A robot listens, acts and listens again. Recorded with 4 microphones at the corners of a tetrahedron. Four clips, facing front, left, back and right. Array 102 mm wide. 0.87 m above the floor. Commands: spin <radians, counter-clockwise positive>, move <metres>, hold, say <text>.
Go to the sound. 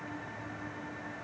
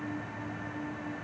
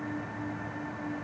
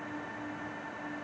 hold
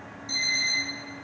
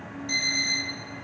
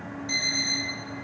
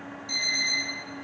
spin 2.44
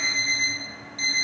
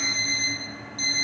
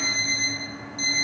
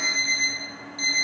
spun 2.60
spin -0.17
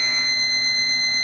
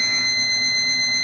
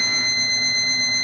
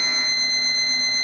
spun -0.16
move 1.0
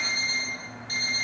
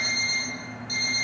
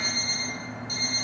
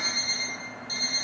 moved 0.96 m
move 1.0
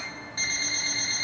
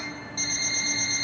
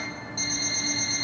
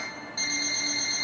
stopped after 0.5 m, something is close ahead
spin -0.17
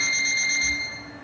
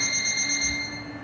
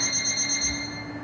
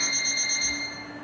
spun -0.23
say Arrived at the alarm clock, straight ahead.